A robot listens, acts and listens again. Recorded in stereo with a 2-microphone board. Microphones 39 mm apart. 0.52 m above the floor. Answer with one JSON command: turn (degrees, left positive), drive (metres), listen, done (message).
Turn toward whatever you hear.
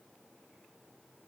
{"listen": true}
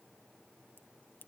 {"turn": 90}
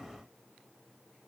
{"done": "Facing where the crack came from. I can't hear it now."}